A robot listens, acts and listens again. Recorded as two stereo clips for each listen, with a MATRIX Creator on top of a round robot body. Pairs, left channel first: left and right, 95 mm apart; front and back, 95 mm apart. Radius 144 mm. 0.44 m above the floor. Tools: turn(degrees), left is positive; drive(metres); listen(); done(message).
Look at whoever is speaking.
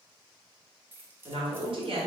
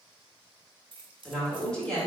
turn(degrees=-80)
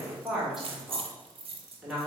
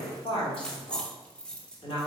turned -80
done("Facing the woman speaking.")